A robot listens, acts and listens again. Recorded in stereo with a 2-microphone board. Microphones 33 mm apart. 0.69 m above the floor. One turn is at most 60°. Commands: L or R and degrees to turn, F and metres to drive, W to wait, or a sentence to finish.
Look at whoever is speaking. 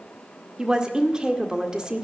R25
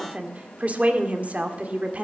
R60
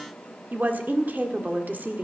R60
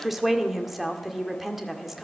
Facing the woman speaking, 1 to 2 m away.